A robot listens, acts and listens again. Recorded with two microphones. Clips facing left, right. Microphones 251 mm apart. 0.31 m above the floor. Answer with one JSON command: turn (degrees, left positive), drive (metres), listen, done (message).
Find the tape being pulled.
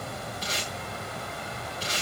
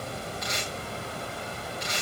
{"turn": 30}
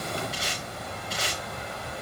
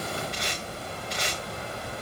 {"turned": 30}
{"done": "Found it: tape being pulled, straight ahead, over 4 m away."}